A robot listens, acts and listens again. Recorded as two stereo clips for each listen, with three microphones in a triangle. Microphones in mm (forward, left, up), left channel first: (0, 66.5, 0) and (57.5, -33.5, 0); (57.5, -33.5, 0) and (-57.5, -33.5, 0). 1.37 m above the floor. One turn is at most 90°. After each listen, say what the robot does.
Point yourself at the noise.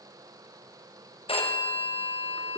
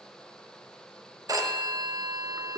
Turn 90° left.
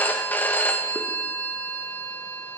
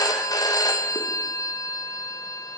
Turn 50° left.
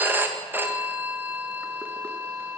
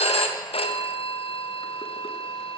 Turn 10° left.
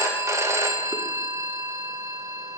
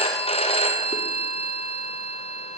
Found it: a phone ringing, straight ahead.